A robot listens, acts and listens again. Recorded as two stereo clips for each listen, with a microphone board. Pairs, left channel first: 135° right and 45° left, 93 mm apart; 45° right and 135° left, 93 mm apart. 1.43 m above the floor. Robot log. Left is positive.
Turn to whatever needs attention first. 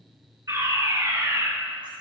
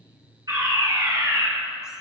note: The fire alarm: 95° left.
cmd yaw +95
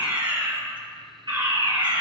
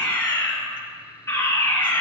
note: The fire alarm is now 15° left.
cmd yaw +15
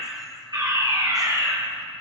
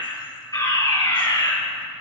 end: Found it: a fire alarm, straight ahead, 2 to 4 m away.